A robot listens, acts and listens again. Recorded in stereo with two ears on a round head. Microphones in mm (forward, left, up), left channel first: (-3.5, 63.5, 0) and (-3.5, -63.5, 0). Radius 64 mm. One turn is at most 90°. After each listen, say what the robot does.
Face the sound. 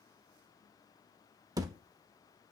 Turn 25° right.
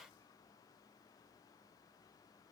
Keep listening.
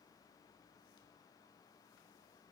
I heard a thud, but can't make it out now. It was about straight ahead or 130° right.